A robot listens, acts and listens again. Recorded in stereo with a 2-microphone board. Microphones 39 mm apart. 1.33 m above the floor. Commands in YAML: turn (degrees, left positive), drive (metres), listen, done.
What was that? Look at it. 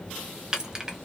turn: -20
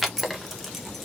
done: "Facing the keys jangling, under 1 m away."